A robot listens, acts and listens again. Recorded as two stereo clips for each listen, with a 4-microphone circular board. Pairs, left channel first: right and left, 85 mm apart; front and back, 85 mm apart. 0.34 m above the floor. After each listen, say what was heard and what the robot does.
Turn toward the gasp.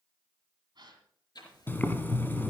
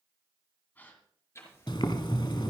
The gasp: 65° left. Turn 65° left.
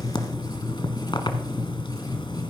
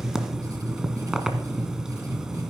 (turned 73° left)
I heard a gasp from this way, but can't make it out now.